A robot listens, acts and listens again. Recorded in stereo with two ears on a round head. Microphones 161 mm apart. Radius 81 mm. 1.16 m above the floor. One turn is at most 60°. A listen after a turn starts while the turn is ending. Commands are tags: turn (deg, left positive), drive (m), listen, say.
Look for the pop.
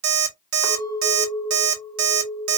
<listen/>
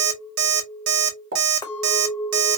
<turn deg="-60"/>
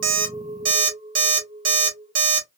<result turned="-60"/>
<listen/>
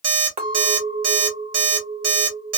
<say>I heard a pop, but can't make it out now. It was about 10° right or 50° right.</say>